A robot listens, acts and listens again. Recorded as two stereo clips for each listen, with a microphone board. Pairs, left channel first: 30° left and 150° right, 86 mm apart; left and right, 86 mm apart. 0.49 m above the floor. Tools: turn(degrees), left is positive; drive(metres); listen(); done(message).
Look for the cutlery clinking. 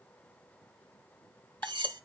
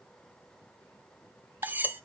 turn(degrees=-155)
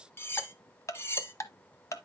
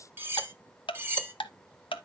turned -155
turn(degrees=-30)
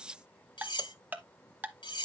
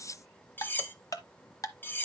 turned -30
turn(degrees=25)
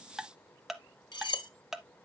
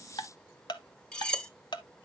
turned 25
turn(degrees=10)
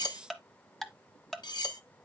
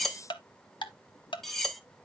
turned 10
done("Found it: cutlery clinking, straight ahead.")